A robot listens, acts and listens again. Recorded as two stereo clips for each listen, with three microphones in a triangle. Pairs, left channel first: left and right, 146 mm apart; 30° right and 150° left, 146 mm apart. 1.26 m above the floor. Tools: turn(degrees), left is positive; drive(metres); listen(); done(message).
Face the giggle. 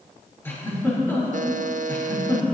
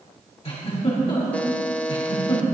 turn(degrees=15)
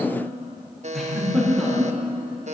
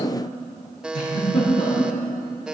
done("Facing the giggle.")